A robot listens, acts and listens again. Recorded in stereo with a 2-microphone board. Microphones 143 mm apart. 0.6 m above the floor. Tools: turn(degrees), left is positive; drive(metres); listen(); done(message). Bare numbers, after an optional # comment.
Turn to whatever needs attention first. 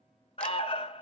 # The alarm: about 40° left or 140° left.
turn(40)
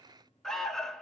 done("Facing the alarm.")